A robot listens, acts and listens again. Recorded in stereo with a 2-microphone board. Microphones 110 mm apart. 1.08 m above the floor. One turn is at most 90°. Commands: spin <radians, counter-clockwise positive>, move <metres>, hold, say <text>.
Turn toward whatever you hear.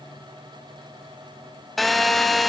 spin 0.52
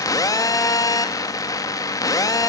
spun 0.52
spin 1.57
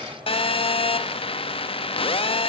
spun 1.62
spin 0.96
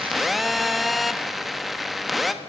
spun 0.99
say Facing the phone buzzing.